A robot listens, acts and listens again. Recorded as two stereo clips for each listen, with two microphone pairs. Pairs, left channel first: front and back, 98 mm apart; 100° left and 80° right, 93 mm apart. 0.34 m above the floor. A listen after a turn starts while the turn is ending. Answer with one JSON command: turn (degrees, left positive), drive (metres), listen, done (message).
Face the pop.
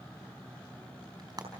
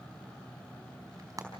{"listen": true}
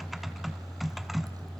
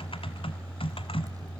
{"listen": true}
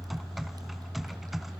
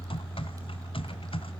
{"done": "I can't make out a pop, only typing on a keyboard."}